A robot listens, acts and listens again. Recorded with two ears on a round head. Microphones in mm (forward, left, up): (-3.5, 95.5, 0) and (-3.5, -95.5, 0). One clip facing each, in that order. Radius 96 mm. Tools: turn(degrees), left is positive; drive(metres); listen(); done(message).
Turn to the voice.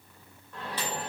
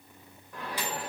listen()
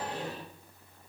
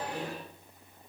listen()
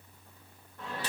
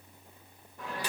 done("I can't make out anyone speaking to turn to.")